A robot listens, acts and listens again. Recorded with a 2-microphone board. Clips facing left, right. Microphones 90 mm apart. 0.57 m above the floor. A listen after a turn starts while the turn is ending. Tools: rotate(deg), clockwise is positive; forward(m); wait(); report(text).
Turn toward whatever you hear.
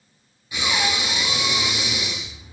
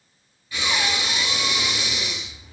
rotate(-20)
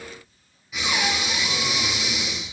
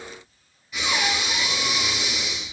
report("Facing the breathing, 1 to 2 m away.")